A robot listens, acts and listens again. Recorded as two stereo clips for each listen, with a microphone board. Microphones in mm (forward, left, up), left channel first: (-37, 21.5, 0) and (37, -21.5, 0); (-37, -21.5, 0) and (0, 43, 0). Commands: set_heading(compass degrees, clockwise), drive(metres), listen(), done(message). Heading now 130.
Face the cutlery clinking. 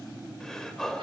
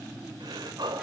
listen()
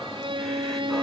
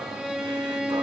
listen()
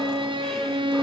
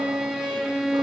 done("I can't make out cutlery clinking to turn to.")